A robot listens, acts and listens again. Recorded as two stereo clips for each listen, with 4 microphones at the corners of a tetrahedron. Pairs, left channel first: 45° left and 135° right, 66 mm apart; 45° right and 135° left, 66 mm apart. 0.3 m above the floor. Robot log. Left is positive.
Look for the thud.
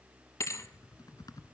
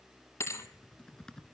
end: Facing the thud.